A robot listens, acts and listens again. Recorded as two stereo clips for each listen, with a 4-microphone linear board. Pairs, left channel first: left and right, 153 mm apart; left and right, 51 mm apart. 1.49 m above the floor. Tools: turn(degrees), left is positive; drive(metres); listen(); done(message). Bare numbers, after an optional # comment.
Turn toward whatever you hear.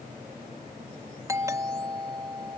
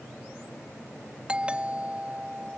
# The doorbell: about 20° right or 160° right.
turn(-20)
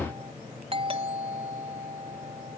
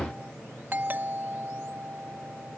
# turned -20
# So it is at 140° right.
turn(-140)
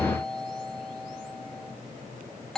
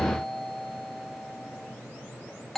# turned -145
done("Facing the doorbell.")